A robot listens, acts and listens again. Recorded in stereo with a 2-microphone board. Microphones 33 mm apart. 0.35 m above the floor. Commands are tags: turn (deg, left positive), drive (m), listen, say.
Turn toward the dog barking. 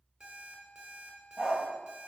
<turn deg="-30"/>
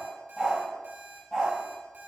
<turn deg="10"/>
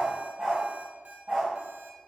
<turn deg="-10"/>
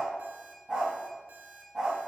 <say>Facing the dog barking.</say>